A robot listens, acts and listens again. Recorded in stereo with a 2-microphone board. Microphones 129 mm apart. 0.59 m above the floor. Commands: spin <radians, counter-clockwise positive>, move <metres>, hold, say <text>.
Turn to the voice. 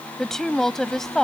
spin 0.52
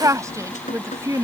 spin -0.44
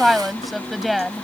say Facing the woman speaking.